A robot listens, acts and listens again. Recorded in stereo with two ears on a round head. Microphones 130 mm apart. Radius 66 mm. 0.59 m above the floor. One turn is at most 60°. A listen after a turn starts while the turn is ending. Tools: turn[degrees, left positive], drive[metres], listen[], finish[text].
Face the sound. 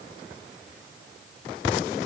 Action: listen[]
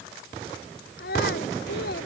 Action: turn[60]
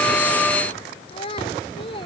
Thought: So it is at 35° left.
Action: turn[35]
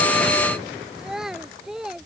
Action: finish[Facing the child speaking.]